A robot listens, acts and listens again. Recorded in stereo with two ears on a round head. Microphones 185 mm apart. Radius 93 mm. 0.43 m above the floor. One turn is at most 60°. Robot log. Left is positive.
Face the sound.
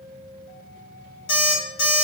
note: The alarm clock: about 65° left or 115° left.
cmd yaw +60
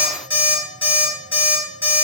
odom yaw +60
note: So it is at 10° left.
cmd yaw +10
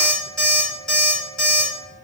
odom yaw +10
end: Found it: an alarm clock, straight ahead, 1 to 2 m away.